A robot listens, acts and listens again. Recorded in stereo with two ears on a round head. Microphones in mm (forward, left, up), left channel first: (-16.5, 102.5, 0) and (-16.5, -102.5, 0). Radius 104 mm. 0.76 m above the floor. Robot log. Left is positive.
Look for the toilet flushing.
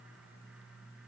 cmd idle
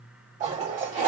note: The toilet flushing: about 30° right or 150° right.
cmd yaw -30
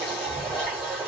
note: So it is at 10° right.
cmd yaw -10
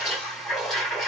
end: Found it: a toilet flushing, straight ahead.